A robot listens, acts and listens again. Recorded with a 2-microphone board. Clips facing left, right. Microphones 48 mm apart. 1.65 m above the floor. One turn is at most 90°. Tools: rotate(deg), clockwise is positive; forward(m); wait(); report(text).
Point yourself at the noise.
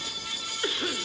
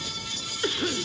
rotate(-30)
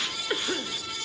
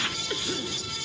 rotate(-90)
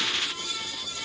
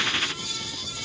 rotate(-65)
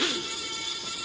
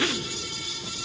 report("Facing the cough, 1 to 2 m away.")